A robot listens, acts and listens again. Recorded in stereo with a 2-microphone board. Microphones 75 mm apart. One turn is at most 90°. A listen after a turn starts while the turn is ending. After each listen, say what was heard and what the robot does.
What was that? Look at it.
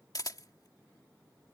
The camera shutter: about 55° left or 125° left. Turn 55° left.
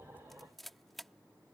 Facing the camera shutter.